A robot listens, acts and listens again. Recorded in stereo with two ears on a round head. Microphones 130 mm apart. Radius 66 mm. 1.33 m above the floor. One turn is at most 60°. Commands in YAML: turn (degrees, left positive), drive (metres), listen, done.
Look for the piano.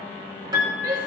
turn: -30
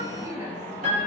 turn: -60
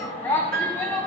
turn: -60
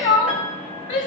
turn: -15
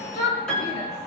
done: "Facing the piano, over 4 m away."